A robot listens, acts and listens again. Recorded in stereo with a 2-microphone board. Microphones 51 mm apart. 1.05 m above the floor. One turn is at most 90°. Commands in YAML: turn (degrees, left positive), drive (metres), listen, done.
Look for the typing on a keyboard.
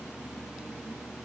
listen: true
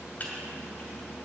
turn: 40
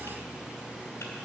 listen: true
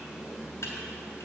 turn: 90
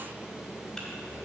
turn: 15
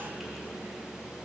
listen: true
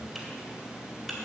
done: "I heard typing on a keyboard from this way, but can't make it out now."